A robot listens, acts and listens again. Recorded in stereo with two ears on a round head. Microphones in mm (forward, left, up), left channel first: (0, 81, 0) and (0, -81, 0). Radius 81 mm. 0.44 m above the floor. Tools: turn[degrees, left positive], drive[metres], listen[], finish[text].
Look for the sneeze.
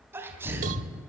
Action: turn[-30]
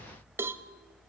Action: listen[]
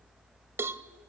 Action: finish[I heard a sneeze, but can't make it out now. It was about 20° left or 140° right.]